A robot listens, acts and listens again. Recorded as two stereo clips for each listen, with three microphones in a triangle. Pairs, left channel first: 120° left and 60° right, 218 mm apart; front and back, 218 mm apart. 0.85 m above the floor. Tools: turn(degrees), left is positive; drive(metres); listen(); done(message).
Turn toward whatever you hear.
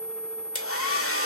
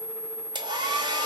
turn(degrees=110)
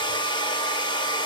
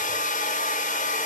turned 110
turn(degrees=50)
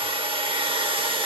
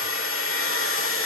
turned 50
turn(degrees=10)
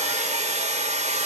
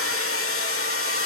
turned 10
done("Facing the hair dryer, under 1 m away.")